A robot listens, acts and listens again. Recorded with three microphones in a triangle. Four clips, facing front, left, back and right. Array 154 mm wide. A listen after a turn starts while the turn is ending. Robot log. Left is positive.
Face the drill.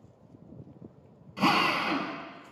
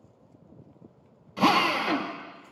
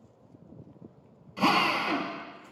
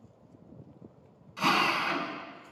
note: The drill: 90° left.
cmd yaw +90
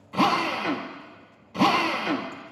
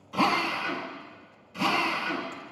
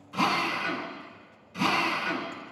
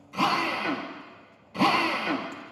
note: The drill is now 25° right.
cmd yaw -25
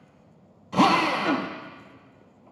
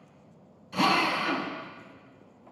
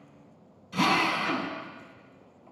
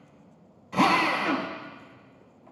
note: The drill is now 10° right.
cmd yaw -10
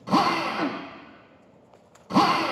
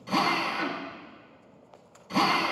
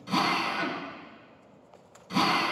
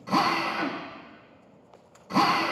end: Found it: a drill, straight ahead, 1 to 2 m away.